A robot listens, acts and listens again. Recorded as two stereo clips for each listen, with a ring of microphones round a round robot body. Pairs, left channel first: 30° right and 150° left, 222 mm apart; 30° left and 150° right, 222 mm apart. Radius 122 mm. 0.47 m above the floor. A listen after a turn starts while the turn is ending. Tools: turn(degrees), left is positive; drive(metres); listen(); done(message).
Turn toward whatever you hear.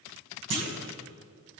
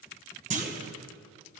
turn(degrees=155)
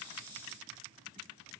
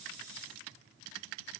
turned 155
done("Facing where the clunk came from. I can't hear it now.")